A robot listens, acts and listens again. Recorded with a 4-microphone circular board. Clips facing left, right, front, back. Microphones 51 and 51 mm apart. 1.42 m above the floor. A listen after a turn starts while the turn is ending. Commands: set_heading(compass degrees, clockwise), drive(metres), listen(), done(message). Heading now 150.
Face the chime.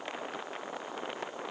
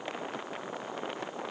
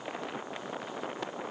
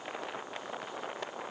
listen()
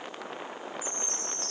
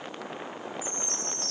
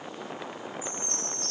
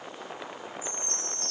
set_heading(5)
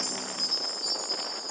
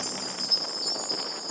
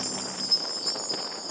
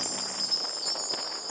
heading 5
set_heading(330)
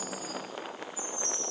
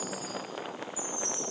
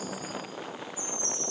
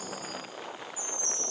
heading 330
done("Facing the chime, 2 to 4 m away.")